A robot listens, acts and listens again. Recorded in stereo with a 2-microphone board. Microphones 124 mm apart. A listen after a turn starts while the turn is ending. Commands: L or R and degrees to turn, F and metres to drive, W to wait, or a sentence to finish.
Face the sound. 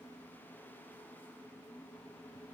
W
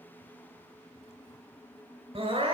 R45
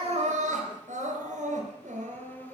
R90
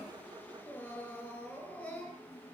Facing the crying.